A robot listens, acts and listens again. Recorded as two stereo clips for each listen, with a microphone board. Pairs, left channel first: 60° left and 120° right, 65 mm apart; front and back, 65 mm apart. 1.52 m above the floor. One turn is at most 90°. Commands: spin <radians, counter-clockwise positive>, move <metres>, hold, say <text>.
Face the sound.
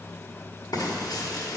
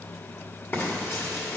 spin 0.96
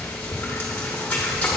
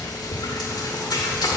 say Facing the frying, 1 to 2 m away.